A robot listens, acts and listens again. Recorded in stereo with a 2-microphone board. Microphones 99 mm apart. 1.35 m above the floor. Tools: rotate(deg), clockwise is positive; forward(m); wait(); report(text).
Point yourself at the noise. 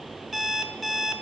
rotate(-30)
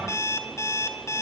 rotate(-150)
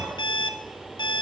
rotate(-55)
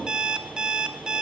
rotate(10)
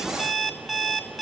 report("Found it: an alarm clock, straight ahead, 1 to 2 m away.")